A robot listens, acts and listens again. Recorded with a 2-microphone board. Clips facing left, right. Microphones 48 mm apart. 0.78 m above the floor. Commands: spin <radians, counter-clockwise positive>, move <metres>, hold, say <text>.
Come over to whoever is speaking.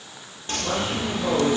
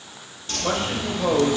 spin -0.70
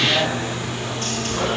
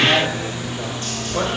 hold
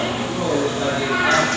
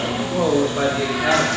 spin -1.75
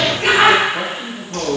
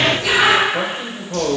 spin -0.79
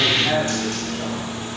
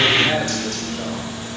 spin -0.44
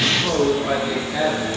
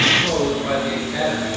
move 1.0
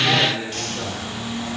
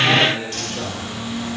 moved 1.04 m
move 1.0
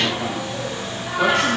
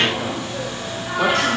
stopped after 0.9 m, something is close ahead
hold
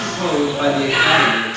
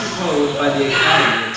spin -0.17
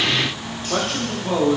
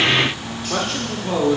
say Arrived at the man speaking, straight ahead.